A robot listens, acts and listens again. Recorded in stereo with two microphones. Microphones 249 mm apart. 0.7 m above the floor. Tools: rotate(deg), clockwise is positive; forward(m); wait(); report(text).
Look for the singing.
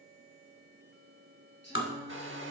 rotate(-45)
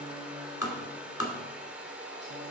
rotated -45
wait()
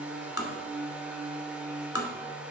rotate(20)
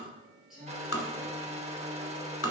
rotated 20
report("Facing the singing, over 4 m away.")